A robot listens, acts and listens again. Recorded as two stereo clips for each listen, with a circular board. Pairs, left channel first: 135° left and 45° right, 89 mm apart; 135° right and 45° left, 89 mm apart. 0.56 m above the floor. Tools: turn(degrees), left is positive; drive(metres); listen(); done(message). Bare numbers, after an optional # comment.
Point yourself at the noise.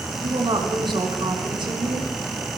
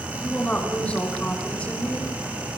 # The woman speaking: 60° right.
turn(-60)
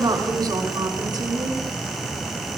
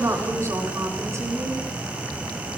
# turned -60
# The woman speaking is now 10° right.
turn(-10)
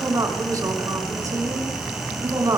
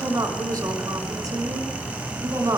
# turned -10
done("Facing the woman speaking.")